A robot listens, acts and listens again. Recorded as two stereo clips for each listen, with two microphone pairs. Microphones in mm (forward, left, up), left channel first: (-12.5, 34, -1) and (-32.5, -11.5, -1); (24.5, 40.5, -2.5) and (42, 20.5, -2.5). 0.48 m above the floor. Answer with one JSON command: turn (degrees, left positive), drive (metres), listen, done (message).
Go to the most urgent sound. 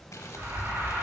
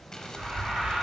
{"turn": -95}
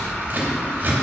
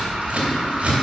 {"turn": -15}
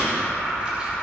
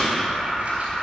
{"drive": 1.0}
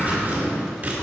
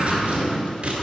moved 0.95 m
{"listen": true}
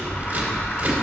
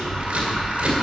{"turn": 10}
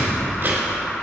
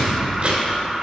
{"drive": 1.0}
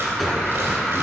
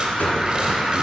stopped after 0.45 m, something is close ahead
{"turn": -15}
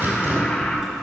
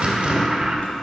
{"done": "I am next to the alarm."}